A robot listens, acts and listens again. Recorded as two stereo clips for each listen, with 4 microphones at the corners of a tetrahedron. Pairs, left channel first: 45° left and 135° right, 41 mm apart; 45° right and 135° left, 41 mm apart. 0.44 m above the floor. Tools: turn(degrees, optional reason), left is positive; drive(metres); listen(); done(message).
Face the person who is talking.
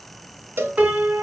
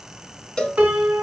listen()
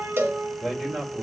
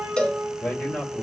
turn(degrees=-60, reason="The man speaking: 60° right.")
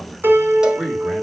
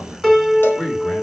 turn(degrees=-25, reason="The man speaking is now 25° right.")
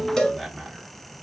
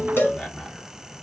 turn(degrees=-40, reason="The man speaking is now 40° right.")
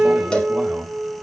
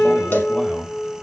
turn(degrees=-80, reason="The man speaking is now 80° right.")
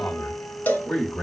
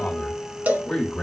turn(degrees=25, reason="The man speaking is now 25° left.")
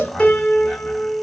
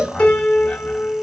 done("Facing the man speaking, 1 to 2 m away.")